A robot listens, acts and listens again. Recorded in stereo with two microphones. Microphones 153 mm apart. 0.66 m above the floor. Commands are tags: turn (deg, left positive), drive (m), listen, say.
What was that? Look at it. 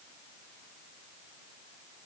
<listen/>
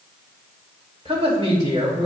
<turn deg="-40"/>
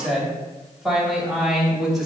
<say>Facing the woman speaking, 2 to 4 m away.</say>